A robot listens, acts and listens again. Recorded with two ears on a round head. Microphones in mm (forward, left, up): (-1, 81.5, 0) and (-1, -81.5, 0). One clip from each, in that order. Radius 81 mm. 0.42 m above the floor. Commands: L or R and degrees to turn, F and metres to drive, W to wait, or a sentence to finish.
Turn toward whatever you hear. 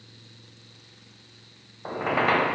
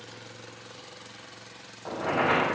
L60
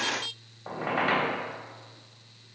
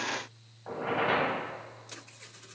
L55
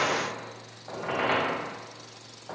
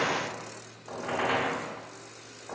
Facing the squeak.